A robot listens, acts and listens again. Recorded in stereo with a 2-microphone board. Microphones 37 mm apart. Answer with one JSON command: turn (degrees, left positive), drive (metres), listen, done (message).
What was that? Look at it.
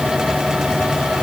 {"listen": true}
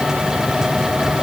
{"listen": true}
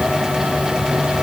{"done": "I can't make out anything."}